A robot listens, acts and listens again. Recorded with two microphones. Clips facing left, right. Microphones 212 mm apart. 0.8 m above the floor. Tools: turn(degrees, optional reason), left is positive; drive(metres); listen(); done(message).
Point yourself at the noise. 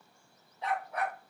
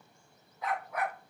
turn(degrees=35, reason="The dog barking: about 35° left or 145° left.")
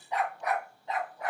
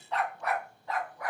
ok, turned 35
turn(degrees=25, reason="The dog barking: about 25° left or 155° left.")
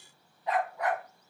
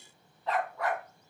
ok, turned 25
turn(degrees=20, reason="So it is at 20° left.")
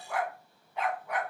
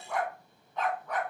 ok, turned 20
turn(degrees=15, reason="The dog barking is now 15° left.")
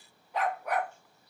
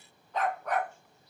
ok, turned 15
turn(degrees=10, reason="The dog barking is now 10° left.")
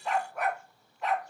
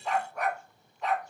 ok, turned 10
done("Found it: a dog barking, straight ahead.")